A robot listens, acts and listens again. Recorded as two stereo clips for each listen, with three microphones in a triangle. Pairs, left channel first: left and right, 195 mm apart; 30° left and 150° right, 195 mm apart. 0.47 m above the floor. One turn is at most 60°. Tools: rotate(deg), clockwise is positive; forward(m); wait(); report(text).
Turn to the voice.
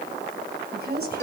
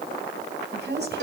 rotate(60)
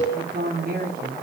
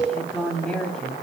rotate(55)
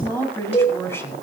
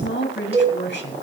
rotate(-15)
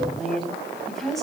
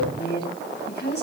report("Found it: a woman speaking, straight ahead, over 4 m away.")